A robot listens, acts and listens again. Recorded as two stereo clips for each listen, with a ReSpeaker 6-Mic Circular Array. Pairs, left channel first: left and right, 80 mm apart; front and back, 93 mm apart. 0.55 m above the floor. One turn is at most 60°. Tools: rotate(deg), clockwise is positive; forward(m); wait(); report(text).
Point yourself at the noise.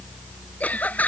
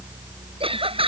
rotate(-60)
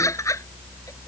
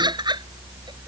rotate(-60)
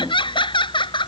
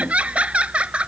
rotate(-60)
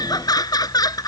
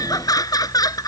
rotate(-50)
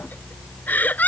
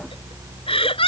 rotate(-20)
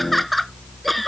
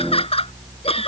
report("Facing the laughter.")